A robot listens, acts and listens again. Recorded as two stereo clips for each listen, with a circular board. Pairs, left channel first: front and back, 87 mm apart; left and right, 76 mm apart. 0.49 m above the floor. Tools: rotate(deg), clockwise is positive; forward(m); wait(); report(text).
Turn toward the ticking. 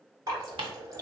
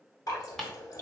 rotate(-175)
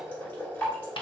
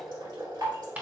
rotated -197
rotate(20)
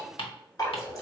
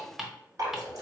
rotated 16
report("Found it: ticking, straight ahead, under 1 m away.")